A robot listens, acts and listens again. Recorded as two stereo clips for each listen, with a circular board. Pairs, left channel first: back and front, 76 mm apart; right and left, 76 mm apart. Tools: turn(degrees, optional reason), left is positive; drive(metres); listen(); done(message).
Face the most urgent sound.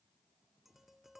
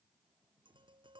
listen()
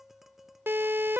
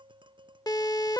turn(degrees=-60, reason="The siren: 60° right.")
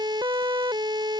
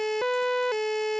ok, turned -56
done("Found it: a siren, straight ahead.")